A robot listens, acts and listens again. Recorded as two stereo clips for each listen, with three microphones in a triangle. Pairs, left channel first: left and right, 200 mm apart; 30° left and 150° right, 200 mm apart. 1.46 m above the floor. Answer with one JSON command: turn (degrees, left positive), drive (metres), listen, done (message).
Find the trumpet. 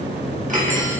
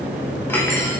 {"listen": true}
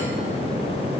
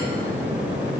{"listen": true}
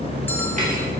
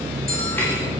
{"done": "I can't make out a trumpet to turn to."}